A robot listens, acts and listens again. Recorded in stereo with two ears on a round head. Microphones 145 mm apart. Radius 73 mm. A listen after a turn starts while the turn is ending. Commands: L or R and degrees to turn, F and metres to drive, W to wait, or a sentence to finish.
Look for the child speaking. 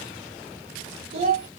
R40
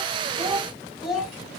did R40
Facing the child speaking.